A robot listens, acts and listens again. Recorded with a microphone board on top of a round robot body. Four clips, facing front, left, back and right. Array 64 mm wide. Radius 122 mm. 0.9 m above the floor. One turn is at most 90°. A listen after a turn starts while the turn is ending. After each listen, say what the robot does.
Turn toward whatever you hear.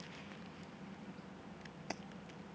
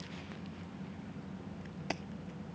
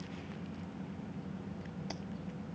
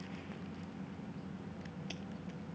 Turn 80° left.
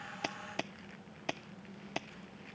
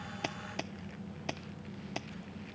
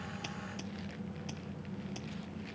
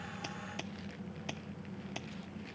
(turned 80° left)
Turn 15° left.
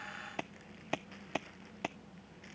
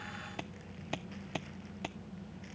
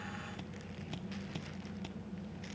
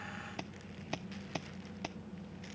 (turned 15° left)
Found it: keys jangling, straight ahead.